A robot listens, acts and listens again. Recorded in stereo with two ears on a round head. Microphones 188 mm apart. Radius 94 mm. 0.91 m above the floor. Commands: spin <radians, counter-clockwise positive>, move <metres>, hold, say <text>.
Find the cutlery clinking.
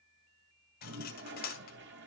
spin 0.79
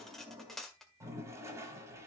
say Facing the cutlery clinking.